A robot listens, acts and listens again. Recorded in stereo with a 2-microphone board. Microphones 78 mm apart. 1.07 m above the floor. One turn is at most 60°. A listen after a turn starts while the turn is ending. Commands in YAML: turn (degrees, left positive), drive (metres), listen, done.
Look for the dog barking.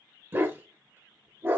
turn: -30
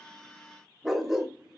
done: "Found it: a dog barking, straight ahead."